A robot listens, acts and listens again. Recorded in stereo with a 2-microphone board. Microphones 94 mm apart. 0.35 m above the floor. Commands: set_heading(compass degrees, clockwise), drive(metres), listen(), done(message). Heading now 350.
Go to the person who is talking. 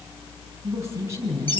set_heading(20)
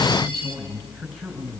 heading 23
drive(1.0)
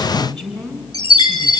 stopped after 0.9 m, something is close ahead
done("Something is in my way. I am facing the woman speaking but have not reached it.")